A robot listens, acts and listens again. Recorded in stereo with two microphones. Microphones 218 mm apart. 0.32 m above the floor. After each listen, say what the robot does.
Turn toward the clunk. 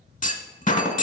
Turn 35° left.
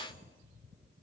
Keep listening.
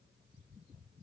I heard a clunk, but can't make it out now. It was about straight ahead or 110° left.